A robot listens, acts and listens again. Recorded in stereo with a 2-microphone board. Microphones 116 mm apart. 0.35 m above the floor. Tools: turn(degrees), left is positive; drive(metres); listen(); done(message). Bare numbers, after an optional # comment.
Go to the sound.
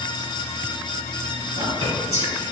# The whispering: about 65° right or 115° right.
turn(-65)
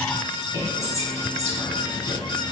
# So it is at 35° right.
turn(-35)
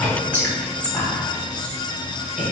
# The whispering is now 10° left.
turn(10)
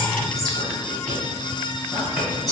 drive(1.0)
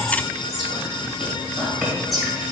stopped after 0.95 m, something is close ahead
done("I am next to the whispering.")